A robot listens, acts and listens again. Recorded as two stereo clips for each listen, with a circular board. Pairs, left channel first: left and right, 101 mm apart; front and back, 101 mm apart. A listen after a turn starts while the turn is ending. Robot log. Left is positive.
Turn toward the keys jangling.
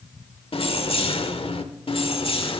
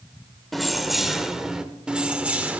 note: The keys jangling: 110° left.
cmd yaw +110
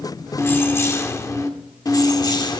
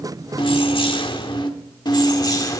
note: The keys jangling is now 50° left.
cmd yaw +50
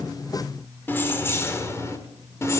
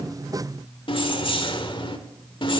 note: The keys jangling is now 30° left.
cmd yaw +30
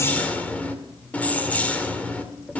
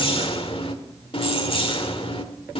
note: The keys jangling is now 15° left.
cmd yaw +15
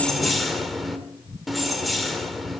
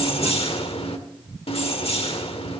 end: Found it: keys jangling, straight ahead.